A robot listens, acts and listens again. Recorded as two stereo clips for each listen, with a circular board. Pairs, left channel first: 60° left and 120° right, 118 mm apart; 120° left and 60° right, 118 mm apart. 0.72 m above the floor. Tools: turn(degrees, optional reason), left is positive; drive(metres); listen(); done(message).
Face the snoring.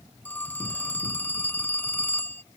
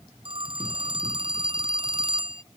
listen()
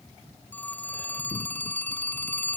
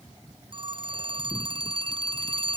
listen()
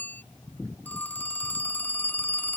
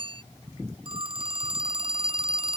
done("I can't make out snoring to turn to.")